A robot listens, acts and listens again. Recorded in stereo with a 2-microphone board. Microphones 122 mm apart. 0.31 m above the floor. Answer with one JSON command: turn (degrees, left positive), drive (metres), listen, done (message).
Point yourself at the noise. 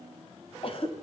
{"turn": 50}
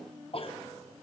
{"turn": 65}
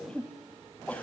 {"turn": 15}
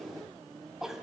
{"done": "Facing the cough."}